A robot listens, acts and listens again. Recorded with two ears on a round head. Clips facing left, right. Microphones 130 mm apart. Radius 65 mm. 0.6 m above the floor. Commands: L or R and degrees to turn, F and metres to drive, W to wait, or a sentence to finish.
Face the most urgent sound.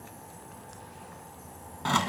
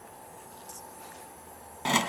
W
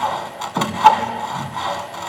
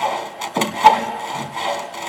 W
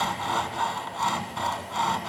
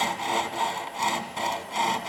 I can't make out anything urgent, only sawing.